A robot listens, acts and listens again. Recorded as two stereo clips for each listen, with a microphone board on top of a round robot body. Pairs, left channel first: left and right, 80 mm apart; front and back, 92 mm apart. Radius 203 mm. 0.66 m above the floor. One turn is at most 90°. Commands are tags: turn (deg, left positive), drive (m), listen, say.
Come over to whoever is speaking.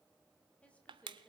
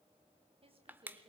<turn deg="90"/>
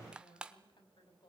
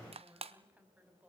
<turn deg="90"/>
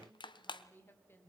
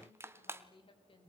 <turn deg="30"/>
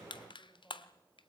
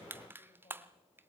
<turn deg="25"/>
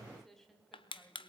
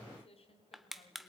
<drive m="1.0"/>
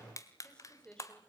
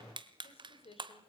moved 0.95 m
<turn deg="10"/>
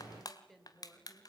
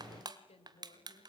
<drive m="1.0"/>
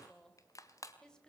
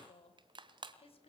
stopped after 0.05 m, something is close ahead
<turn deg="10"/>
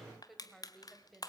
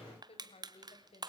<say>Something is in my way. I am facing the woman speaking but have not reached it.</say>